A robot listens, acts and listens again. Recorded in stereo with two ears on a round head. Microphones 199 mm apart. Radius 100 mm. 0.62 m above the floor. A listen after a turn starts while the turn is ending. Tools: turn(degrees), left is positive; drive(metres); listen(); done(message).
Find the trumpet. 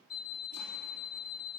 listen()
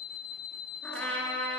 turn(degrees=30)
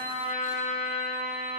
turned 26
turn(degrees=145)
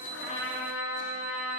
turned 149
done("Found it: a trumpet, straight ahead, 2 to 4 m away.")